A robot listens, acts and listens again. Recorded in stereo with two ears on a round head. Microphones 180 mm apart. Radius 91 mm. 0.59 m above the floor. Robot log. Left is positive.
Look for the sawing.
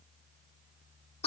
cmd idle
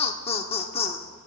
cmd idle
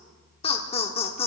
end: I can't make out sawing to turn to.